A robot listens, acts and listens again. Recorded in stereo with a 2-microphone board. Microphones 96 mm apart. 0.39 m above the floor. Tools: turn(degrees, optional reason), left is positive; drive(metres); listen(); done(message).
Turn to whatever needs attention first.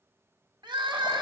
turn(degrees=-60, reason="The crying: about 60° right or 120° right.")
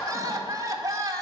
turn(degrees=-45, reason="So it is at 45° right.")
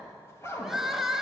done("Facing the crying, 1 to 2 m away.")